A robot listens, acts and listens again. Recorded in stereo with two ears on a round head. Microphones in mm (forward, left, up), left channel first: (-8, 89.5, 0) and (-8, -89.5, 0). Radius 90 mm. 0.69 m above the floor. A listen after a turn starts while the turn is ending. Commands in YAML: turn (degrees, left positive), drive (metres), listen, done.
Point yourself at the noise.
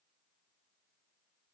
listen: true
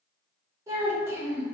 turn: -30
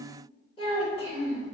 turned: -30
turn: 30
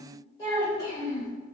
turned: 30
turn: 20
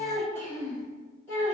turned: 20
turn: 15
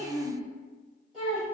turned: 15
done: "Found it: a child speaking, straight ahead, 2 to 4 m away."